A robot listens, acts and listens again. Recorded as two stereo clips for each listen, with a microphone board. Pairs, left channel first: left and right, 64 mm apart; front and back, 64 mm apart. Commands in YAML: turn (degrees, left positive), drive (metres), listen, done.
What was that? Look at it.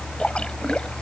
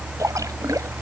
turn: 165
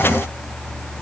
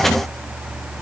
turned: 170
done: "I heard a splash from this way, but can't make it out now."